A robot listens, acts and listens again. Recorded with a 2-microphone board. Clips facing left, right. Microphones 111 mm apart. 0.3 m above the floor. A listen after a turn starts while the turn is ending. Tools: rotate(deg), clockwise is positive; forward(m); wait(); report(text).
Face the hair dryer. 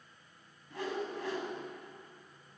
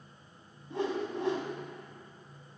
wait()
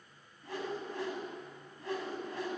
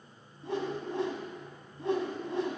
wait()
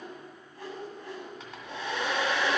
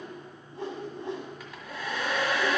rotate(-25)
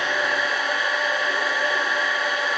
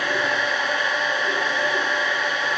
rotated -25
report("Found it: a hair dryer, straight ahead, 1 to 2 m away.")